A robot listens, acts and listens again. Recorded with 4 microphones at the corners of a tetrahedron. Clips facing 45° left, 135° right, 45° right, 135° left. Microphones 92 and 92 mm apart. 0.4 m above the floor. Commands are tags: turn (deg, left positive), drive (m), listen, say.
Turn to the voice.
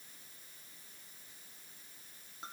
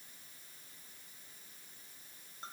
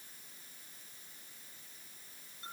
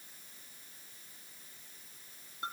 <listen/>
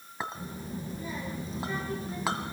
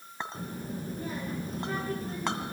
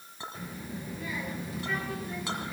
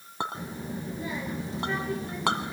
<turn deg="-165"/>
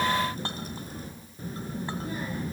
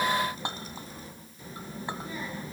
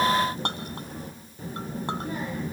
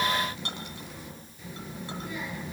<say>Facing the child speaking, over 4 m away.</say>